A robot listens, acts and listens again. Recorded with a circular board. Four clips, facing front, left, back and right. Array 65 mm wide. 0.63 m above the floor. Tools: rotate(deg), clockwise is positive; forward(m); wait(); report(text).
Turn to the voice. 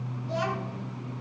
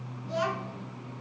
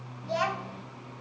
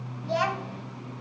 rotate(120)
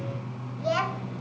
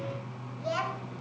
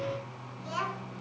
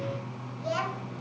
report("Found it: a child speaking, straight ahead, 2 to 4 m away.")